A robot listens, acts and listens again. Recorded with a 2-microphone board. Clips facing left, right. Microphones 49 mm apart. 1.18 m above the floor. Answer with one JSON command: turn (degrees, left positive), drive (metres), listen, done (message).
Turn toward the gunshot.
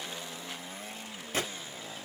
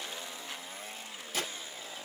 {"turn": 45}
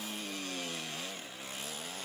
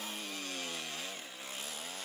{"listen": true}
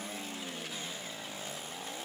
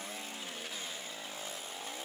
{"done": "I heard a gunshot, but can't make it out now. It was about straight ahead or 90° left."}